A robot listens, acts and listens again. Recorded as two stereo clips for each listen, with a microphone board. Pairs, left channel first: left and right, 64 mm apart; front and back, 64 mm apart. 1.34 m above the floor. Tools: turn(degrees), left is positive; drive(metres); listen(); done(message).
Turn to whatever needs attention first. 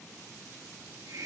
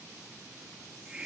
listen()
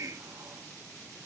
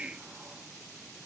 listen()
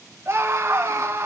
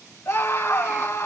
turn(degrees=-35)
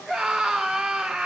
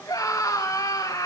done("Facing the scream.")